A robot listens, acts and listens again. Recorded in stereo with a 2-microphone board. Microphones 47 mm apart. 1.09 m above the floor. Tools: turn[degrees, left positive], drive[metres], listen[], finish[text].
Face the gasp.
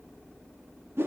Action: listen[]
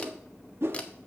Action: listen[]
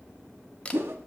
Action: finish[I can't make out a gasp to turn to.]